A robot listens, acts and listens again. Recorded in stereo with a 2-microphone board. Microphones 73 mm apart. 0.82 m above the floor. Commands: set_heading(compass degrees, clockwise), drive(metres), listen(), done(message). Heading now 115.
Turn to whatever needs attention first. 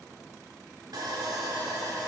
listen()
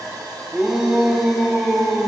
set_heading(145)
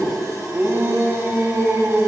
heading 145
set_heading(290)
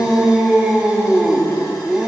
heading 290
set_heading(300)
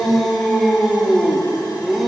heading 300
done("Facing the shout, 1 to 2 m away.")